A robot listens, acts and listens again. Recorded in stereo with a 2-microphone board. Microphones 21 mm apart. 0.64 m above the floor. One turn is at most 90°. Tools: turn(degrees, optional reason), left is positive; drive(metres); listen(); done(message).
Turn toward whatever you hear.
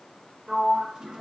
turn(degrees=-35, reason="The sliding door: about 35° right or 145° right.")
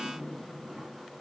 listen()
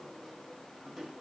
listen()
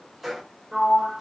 turn(degrees=-10, reason="So it is at 10° right.")
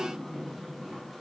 done("Found it: a sliding door, straight ahead, under 1 m away.")